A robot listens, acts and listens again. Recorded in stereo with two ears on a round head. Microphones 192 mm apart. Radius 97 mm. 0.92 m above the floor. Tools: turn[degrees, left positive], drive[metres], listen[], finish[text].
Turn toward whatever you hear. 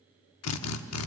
Action: turn[90]
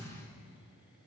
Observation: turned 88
Action: listen[]
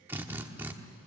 Thought: The drill is now 10° right.
Action: turn[-10]
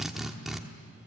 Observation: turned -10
Action: finish[Found it: a drill, straight ahead.]